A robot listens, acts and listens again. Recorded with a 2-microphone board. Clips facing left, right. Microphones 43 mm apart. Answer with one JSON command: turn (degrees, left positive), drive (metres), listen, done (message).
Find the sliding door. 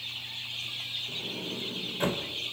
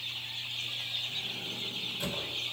{"turn": 45}
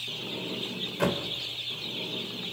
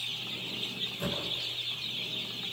{"turn": 90}
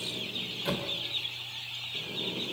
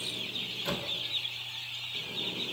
{"done": "Found it: a sliding door, straight ahead, 2 to 4 m away."}